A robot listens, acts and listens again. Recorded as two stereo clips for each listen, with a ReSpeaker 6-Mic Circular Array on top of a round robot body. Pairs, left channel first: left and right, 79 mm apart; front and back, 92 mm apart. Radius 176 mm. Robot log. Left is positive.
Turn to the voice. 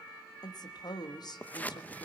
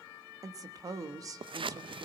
note: The woman speaking: 125° left.
cmd yaw +125
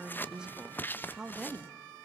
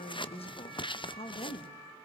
note: The woman speaking is now 10° right.
cmd yaw -10
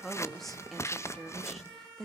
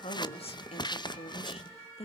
end: Facing the woman speaking.